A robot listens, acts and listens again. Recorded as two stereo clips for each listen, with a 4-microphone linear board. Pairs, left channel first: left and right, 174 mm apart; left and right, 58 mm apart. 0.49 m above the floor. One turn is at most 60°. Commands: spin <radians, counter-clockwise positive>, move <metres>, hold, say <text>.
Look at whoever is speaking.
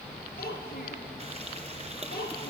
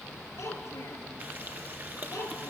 spin 0.96
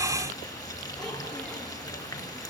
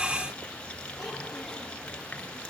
hold
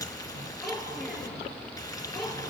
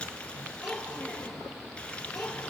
say Found it: a child speaking, straight ahead.